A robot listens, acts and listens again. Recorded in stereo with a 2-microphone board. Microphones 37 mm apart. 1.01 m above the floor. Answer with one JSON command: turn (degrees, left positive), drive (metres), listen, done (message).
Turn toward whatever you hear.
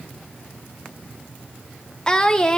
{"turn": 20}
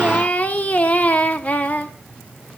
{"turn": 140}
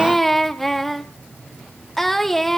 {"done": "Found it: singing, straight ahead, 1 to 2 m away."}